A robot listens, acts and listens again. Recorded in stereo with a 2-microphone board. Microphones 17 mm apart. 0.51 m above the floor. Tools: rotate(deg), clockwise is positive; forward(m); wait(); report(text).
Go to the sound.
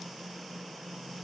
wait()
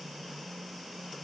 wait()
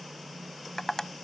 rotate(-30)
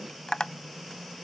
rotate(-120)
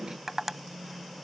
rotate(20)
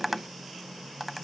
forward(1.0)
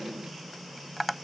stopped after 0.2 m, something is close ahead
report("Something is in my way. I am facing the tapping but have not reached it.")